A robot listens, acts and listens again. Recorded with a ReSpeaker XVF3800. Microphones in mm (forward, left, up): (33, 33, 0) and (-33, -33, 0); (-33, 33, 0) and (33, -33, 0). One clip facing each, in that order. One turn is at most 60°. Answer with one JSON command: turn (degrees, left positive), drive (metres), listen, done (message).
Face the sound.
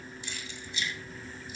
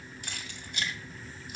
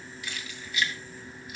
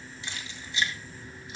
{"turn": -60}
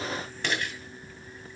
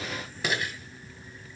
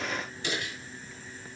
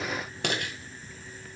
{"turn": -50}
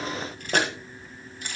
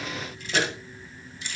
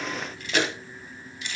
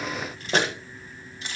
{"turn": 10}
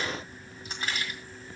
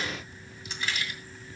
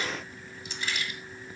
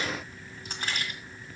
{"done": "Found it: keys jangling, straight ahead."}